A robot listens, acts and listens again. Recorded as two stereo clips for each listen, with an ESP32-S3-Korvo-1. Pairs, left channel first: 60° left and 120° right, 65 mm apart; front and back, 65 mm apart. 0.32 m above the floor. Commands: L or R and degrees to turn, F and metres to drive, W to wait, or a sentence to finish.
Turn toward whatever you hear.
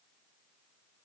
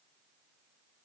W
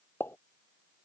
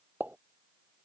L115
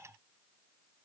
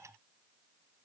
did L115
Facing where the pop came from. I can't hear it now.